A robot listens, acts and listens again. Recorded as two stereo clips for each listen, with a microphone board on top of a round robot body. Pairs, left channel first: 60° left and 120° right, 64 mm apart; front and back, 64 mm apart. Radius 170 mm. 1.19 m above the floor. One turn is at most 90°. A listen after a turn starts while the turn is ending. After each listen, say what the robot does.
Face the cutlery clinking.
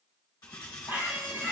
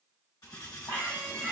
Turn 35° left.
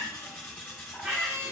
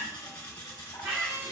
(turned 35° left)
Found it: cutlery clinking, straight ahead.